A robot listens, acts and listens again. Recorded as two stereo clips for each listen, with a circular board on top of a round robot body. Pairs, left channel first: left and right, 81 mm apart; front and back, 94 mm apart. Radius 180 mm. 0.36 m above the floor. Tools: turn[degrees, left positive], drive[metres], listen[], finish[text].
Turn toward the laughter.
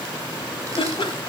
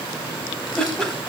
Thought: The laughter: 85° left.
Action: turn[85]
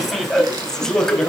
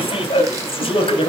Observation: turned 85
Thought: The laughter is now 10° left.
Action: turn[10]
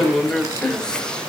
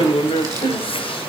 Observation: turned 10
Thought: The laughter is now 10° left.
Action: turn[10]
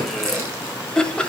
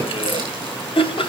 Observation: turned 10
Thought: The laughter is now 10° left.
Action: turn[10]
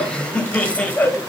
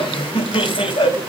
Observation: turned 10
Thought: The laughter is now 20° left.
Action: turn[20]
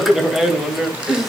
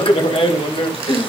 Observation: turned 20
Action: finish[Facing the laughter.]